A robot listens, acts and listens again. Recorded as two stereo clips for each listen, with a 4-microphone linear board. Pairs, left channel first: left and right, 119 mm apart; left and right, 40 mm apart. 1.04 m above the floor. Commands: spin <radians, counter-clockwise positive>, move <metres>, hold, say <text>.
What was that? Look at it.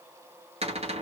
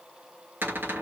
spin -1.05
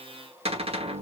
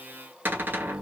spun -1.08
spin -0.96
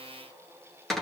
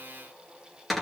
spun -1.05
say Found it: a cupboard door, straight ahead.